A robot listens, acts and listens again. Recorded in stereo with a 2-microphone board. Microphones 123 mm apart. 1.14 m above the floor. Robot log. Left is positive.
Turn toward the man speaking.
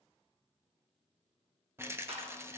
cmd idle
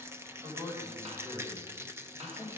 note: The man speaking: about 40° right or 140° right.
cmd yaw -40
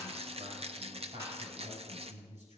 note: So it is at 115° right.
cmd yaw -115
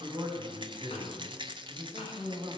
note: The man speaking is now 40° right.
cmd yaw -40
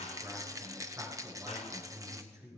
note: The man speaking is now 25° right.
cmd yaw -25
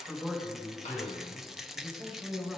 end: Facing the man speaking, over 4 m away.